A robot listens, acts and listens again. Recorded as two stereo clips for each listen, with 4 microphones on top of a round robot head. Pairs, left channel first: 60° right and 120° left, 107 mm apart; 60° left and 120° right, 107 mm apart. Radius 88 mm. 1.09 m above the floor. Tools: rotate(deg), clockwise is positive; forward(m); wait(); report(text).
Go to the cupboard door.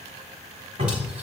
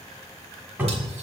rotate(-160)
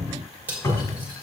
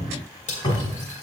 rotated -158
forward(1.0)
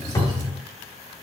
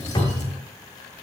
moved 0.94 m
forward(1.0)
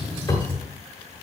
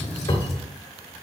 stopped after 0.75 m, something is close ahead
report("I am next to the cupboard door.")